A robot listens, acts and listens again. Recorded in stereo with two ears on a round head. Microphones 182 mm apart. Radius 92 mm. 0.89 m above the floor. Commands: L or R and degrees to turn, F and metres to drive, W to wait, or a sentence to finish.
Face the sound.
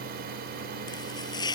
L20
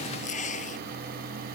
L140
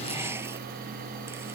W
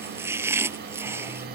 R10
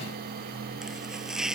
Found it: chopping, straight ahead.